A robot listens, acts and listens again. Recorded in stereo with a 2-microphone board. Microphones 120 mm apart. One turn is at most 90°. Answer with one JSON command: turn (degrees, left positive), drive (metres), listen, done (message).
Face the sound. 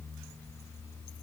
{"listen": true}
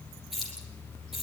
{"turn": -30}
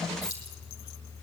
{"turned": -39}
{"turn": 35}
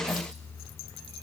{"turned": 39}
{"listen": true}
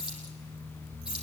{"done": "Facing the keys jangling, over 4 m away."}